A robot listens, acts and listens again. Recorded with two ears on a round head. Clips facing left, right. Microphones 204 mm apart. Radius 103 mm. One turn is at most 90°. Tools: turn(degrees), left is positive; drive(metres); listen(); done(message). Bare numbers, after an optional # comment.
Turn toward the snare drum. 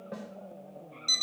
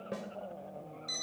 # The snare drum: about 35° right or 145° right.
turn(-35)
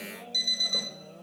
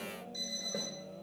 listen()
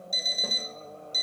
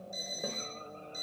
listen()
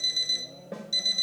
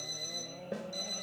done("Facing the snare drum, 1 to 2 m away.")